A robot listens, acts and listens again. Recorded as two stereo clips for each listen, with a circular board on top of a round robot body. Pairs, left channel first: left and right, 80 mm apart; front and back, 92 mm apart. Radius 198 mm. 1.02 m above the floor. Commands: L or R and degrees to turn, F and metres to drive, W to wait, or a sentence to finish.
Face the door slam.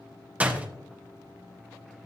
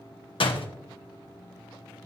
R20
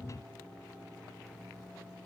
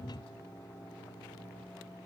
Facing where the door slam came from. I can't hear it now.